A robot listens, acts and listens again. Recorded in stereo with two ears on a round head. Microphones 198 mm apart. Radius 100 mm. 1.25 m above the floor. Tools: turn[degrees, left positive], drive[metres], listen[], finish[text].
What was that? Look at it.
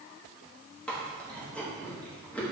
Action: turn[30]
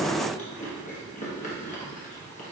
Thought: So it is at 145° left.
Action: turn[145]
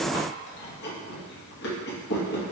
Thought: The chewing is now 55° left.
Action: turn[55]
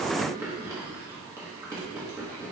Thought: The chewing is now 10° right.
Action: turn[-10]
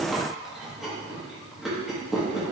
Action: finish[Found it: chewing, straight ahead.]